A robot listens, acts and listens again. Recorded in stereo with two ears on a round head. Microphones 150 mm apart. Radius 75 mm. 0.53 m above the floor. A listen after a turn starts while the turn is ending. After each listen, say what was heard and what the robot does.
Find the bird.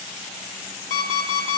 Keep listening.
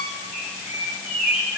Turn 30° right.
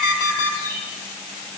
So it is at 15° left. Turn 15° left.
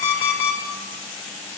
Keep listening.
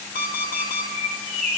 Found it: a bird, straight ahead.